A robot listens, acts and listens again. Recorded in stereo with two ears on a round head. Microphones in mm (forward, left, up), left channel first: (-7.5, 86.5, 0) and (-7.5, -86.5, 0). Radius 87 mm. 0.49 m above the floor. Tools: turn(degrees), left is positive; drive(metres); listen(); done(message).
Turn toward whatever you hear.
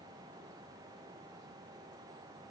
listen()
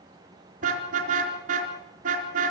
turn(degrees=-45)
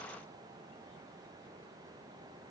listen()
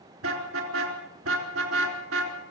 turn(degrees=-90)
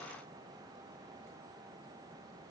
listen()
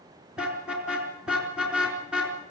done("Found it: a car horn, straight ahead.")